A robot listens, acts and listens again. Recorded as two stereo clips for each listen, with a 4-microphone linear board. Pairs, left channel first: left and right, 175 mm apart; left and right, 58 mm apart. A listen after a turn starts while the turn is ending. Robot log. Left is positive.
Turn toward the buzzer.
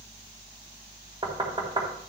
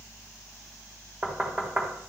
cmd idle
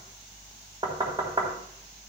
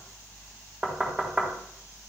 cmd idle
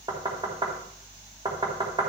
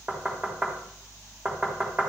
end: I can't make out a buzzer to turn to.